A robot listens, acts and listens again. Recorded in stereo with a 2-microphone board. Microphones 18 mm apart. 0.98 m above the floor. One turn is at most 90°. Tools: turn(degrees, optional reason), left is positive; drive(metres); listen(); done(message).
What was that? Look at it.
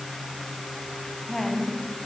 turn(degrees=25, reason="The woman speaking: about 25° left or 155° left.")
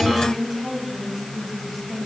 done("Found it: a woman speaking, straight ahead, over 4 m away.")